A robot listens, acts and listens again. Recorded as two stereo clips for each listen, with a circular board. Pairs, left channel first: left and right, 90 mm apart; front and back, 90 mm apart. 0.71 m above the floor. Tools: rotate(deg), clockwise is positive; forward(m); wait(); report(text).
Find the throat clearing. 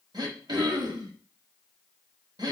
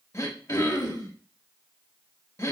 rotate(55)
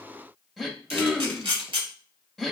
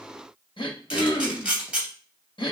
report("Facing the throat clearing, under 1 m away.")